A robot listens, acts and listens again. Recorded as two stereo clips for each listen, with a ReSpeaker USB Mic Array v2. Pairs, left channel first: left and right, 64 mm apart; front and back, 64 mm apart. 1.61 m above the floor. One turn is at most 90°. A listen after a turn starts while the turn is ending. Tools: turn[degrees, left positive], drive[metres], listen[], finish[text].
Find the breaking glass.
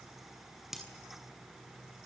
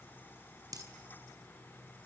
Thought: The breaking glass: 175° right.
Action: turn[-90]
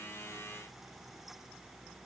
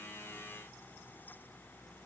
Thought: Nothing new. It was at 85° right.
Action: turn[-85]
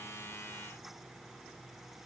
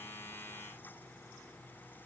Action: finish[Facing where the breaking glass came from. I can't hear it now.]